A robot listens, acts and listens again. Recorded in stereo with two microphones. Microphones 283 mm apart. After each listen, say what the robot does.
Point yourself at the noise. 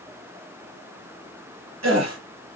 Turn 65° right.
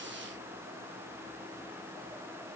Keep listening.
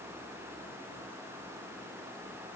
I heard a gasp, but can't make it out now. It was about straight ahead or 50° right.